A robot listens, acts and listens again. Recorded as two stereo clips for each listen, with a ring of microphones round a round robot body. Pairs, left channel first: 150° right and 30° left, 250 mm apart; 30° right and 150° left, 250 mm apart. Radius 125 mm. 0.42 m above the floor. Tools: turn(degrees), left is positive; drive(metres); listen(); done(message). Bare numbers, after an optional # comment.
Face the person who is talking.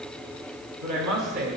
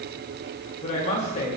# The woman speaking: 30° left.
turn(30)
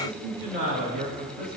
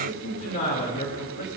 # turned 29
done("Facing the woman speaking, 2 to 4 m away.")